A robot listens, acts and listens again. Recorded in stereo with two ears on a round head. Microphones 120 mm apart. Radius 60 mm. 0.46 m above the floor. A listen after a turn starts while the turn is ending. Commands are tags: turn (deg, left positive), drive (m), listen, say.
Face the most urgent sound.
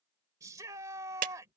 <turn deg="-25"/>
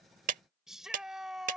<say>Found it: a shout, straight ahead.</say>